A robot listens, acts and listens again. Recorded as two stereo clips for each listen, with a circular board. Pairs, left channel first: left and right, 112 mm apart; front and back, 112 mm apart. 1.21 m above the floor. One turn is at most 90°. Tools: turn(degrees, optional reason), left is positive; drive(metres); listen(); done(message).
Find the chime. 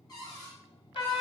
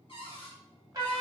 listen()
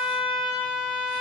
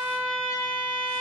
listen()
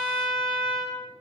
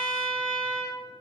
done("I can't make out a chime, only a trumpet and a cupboard door.")